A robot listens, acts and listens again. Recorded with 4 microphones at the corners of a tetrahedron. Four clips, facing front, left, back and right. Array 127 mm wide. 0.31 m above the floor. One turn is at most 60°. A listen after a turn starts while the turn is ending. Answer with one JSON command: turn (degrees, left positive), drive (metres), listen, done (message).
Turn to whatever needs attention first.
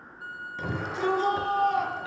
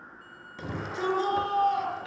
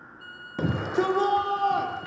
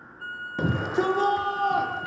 {"turn": -60}
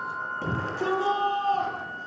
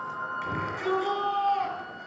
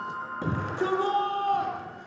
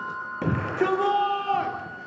{"turn": -60}
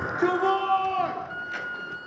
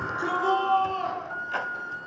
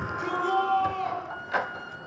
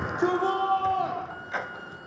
{"turn": -15}
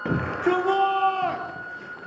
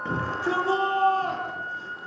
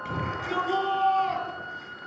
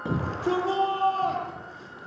{"done": "Facing the shout."}